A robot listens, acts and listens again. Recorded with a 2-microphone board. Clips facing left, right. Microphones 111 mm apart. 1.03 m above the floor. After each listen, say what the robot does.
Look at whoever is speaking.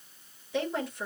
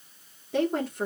Turn 60° right.
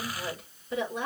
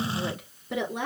Turn 65° right.
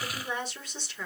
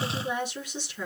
Turn 10° right.
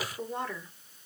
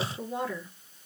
Found it: a woman speaking, straight ahead, 2 to 4 m away.